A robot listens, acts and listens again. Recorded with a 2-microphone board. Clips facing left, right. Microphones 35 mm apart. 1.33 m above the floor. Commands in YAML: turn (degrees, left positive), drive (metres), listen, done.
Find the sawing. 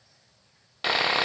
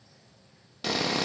turn: 35
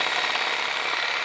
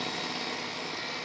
turn: 110
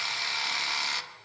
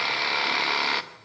turn: -25
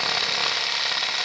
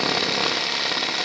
done: "Facing the sawing."